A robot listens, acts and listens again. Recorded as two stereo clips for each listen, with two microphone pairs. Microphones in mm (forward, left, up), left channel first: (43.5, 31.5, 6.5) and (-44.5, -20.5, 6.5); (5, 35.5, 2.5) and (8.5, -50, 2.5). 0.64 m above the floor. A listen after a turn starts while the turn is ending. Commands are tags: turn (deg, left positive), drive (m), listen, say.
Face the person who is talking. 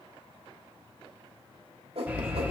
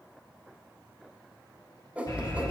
<listen/>
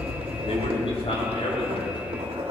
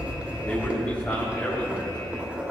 <turn deg="20"/>
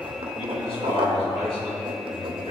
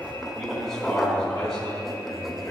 <say>Facing the man speaking, over 4 m away.</say>